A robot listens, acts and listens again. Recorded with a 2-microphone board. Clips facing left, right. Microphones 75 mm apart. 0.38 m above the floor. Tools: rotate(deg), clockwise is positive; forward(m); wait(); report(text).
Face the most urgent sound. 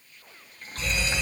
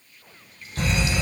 rotate(60)
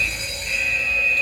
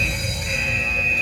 rotate(20)
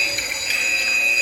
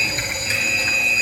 report("Found it: a fire alarm, straight ahead.")